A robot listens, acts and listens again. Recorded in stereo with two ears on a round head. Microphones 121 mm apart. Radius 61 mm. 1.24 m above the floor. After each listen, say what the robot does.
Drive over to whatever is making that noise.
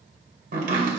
Turn 70° right.
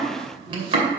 Turn 40° right.
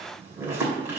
Turn 15° right.
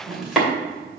Drive 1.0 m forward.
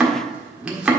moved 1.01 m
Drive 1.0 m forward.
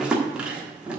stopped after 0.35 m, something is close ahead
Turn 10° right.
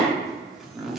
Arrived at the chopping, straight ahead.